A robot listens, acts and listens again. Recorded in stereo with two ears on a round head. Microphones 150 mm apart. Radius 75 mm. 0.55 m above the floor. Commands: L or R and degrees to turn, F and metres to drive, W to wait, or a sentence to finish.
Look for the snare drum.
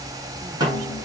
R25
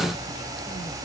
W
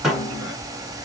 Found it: a snare drum, straight ahead.